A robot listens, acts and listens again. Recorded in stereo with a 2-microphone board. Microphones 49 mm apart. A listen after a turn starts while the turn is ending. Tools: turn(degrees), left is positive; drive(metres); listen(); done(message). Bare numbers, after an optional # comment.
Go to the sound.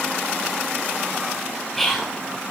turn(30)
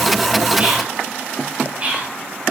# So it is at 30° right.
turn(-30)
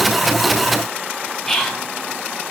drive(1.0)
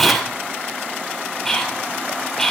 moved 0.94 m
# The whispering is now 10° left.
turn(10)
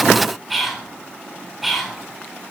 drive(1.0)
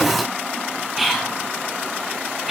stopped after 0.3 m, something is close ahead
done("Something is in my way. I am facing the whispering but have not reached it.")